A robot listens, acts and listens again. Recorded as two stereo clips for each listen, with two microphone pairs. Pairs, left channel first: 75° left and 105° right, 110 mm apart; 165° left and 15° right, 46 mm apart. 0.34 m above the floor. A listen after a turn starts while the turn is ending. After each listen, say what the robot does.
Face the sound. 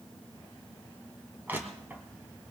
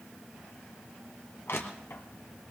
Turn 180° left.
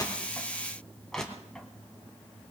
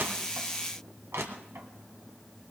Turn 10° right.
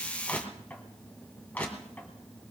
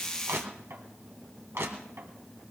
Found it: crushing, straight ahead, 2 to 4 m away.